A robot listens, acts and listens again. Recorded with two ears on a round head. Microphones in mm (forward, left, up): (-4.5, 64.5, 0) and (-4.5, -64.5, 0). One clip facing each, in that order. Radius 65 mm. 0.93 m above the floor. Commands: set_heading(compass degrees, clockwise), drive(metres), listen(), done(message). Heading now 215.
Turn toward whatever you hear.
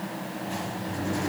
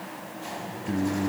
set_heading(305)
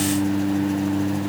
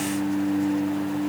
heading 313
set_heading(288)
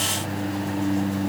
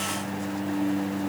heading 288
done("Facing the singing.")